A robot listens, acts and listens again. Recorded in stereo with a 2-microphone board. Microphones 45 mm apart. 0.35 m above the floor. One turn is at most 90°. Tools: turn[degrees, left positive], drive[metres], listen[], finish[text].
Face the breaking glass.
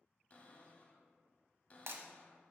Thought: The breaking glass: about 70° right or 110° right.
Action: turn[-70]
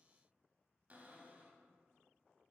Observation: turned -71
Action: listen[]
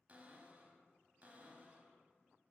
Action: finish[I heard breaking glass, but can't make it out now. It was about straight ahead or 40° right.]